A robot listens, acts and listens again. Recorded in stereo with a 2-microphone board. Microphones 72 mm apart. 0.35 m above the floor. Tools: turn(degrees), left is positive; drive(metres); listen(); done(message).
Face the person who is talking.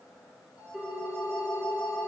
listen()
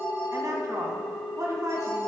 turn(degrees=-45)
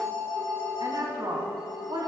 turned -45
turn(degrees=-85)
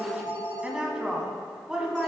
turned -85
turn(degrees=-10)
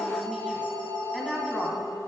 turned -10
done("Found it: a woman speaking, straight ahead, 2 to 4 m away.")